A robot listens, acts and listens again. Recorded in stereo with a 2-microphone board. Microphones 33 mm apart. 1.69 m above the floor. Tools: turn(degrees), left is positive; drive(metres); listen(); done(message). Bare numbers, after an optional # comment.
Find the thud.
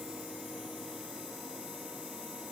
listen()
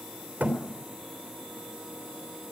# The thud: about 60° right or 120° right.
turn(-60)
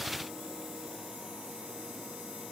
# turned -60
listen()
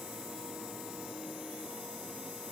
done("I heard a thud, but can't make it out now. It was about straight ahead or 60° right.")